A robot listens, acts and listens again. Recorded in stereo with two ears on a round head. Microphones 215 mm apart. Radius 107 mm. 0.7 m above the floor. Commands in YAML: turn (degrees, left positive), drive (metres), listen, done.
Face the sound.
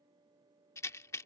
turn: 30
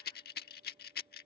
turn: 135
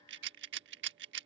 turn: -55
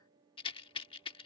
turn: 25
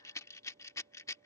turn: 15
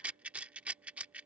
done: "Facing the rattle."